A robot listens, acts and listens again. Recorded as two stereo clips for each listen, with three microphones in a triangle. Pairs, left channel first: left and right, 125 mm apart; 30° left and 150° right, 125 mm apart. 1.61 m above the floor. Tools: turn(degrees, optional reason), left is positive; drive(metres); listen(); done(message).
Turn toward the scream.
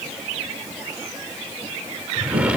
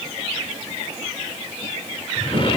listen()
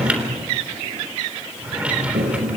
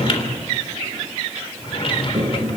listen()
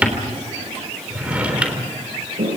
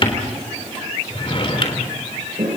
done("I can't make out a scream to turn to.")